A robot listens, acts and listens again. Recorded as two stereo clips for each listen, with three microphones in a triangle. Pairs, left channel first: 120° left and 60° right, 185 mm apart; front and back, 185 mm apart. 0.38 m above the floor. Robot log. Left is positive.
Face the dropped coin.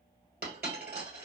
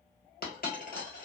note: The dropped coin: 35° right.
cmd yaw -35
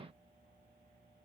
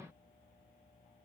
end: Facing where the dropped coin came from. I can't hear it now.